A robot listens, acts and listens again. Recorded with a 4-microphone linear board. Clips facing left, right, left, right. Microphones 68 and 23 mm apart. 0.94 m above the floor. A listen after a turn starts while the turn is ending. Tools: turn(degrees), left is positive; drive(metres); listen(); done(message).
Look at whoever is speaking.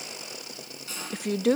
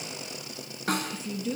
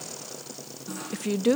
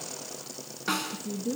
turn(degrees=65)
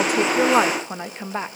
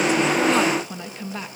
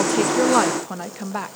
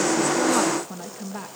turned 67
turn(degrees=35)
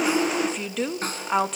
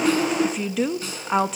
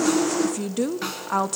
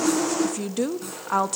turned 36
done("Facing the woman speaking, 1 to 2 m away.")